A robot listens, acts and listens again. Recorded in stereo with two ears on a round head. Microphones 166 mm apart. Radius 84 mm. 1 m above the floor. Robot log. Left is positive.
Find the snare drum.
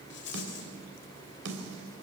note: The snare drum: about 65° right or 115° right.
cmd yaw -65
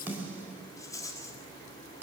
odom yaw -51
note: So it is at 10° right.
cmd yaw -10
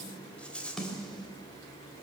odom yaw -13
end: Found it: a snare drum, straight ahead.